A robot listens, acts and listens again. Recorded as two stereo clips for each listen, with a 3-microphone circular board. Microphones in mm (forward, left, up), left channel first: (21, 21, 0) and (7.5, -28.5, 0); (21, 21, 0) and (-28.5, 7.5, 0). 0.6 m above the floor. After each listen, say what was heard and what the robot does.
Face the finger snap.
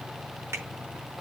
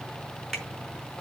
The finger snap: 70° right. Turn 70° right.
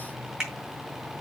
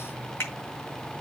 The finger snap is now 25° right. Turn 25° right.
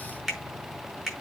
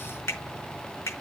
The finger snap is now 10° right. Turn 10° right.
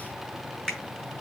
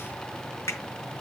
Facing the finger snap.